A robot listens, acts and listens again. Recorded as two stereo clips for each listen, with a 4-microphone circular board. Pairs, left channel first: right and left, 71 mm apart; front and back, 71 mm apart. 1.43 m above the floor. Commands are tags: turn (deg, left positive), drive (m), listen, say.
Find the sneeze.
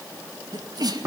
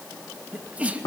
<turn deg="110"/>
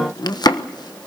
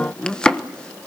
<say>I heard a sneeze from this way, but can't make it out now.</say>